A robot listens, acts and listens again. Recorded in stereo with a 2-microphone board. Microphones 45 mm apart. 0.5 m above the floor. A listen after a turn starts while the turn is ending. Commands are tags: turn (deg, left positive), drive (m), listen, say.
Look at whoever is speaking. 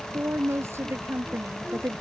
<turn deg="-75"/>
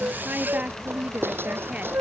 <listen/>
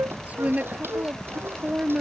<turn deg="-35"/>
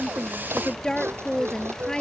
<turn deg="20"/>
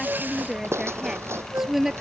<turn deg="-10"/>
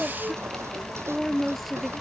<say>Found it: a woman speaking, straight ahead.</say>